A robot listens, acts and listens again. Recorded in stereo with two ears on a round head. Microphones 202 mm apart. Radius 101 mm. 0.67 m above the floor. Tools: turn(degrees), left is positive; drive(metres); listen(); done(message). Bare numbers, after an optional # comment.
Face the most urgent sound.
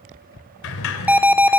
turn(-30)
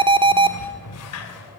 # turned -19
# So it is at 155° right.
turn(-155)
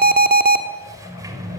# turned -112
# The alarm is now 45° right.
turn(-45)
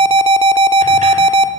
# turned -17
# The alarm is now 25° right.
turn(-25)
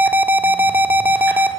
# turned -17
# The alarm is now 10° right.
turn(-10)
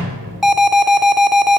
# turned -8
done("Found it: an alarm, straight ahead.")